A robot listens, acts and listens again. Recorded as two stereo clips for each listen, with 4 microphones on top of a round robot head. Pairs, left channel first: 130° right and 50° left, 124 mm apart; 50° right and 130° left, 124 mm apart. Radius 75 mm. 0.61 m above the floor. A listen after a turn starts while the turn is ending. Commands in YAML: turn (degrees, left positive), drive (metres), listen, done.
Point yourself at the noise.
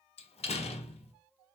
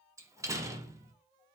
turn: -165
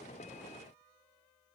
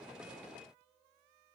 done: "I heard a door slam from this way, but can't make it out now."